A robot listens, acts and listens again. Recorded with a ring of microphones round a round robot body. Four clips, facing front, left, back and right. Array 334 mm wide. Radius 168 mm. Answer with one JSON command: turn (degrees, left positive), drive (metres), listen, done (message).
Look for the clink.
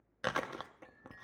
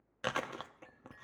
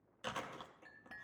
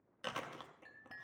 {"turn": -130}
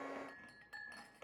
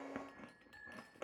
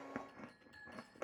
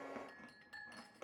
{"turn": -15}
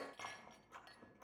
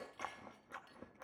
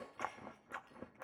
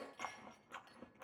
{"done": "Facing the clink, 2 to 4 m away."}